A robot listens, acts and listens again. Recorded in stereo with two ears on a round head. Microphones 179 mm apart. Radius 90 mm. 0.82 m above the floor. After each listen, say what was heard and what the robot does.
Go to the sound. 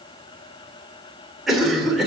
Turn 30° left.
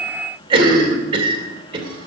So it is at 30° right. Turn 30° right.
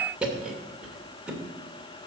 Drive 1.0 m forward.
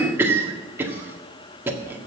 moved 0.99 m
The cough is now 15° right. Turn 15° right.
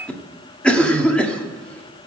Drive 1.0 m forward.
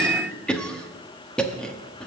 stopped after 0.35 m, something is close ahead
Arrived at the cough, straight ahead.